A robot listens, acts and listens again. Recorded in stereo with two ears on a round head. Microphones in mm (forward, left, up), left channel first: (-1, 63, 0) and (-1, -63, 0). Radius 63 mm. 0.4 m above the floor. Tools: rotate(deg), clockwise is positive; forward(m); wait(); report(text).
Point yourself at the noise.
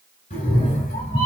rotate(-40)
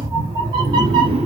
rotate(45)
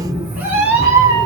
rotate(25)
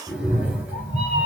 rotate(10)
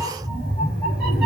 report("Facing the cat meowing, 1 to 2 m away.")